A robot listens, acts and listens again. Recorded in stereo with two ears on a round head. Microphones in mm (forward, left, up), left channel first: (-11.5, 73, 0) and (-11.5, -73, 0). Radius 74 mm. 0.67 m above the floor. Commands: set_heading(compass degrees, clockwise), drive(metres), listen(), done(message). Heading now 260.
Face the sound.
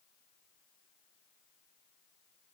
listen()
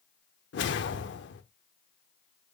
set_heading(170)
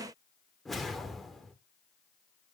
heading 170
done("Facing the whoosh, under 1 m away.")